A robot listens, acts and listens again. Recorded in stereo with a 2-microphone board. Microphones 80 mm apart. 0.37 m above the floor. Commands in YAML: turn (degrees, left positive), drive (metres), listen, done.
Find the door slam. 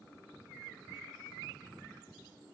listen: true
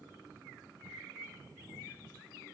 listen: true
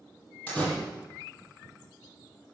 turn: 15
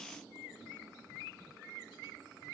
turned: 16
listen: true
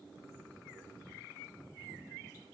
done: "I heard a door slam, but can't make it out now. It was about straight ahead or 145° left."